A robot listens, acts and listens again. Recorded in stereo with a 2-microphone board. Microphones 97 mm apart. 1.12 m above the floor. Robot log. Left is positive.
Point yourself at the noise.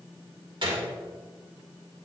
note: The gunshot: about 60° right or 120° right.
cmd yaw -60
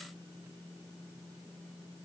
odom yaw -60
cmd idle
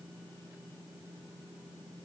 end: I heard a gunshot, but can't make it out now. It was about straight ahead or 60° right.